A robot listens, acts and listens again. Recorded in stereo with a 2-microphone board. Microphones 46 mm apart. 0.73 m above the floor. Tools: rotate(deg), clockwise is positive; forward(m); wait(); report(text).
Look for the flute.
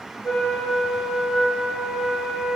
rotate(-70)
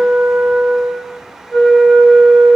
report("Found it: a flute, straight ahead, 1 to 2 m away.")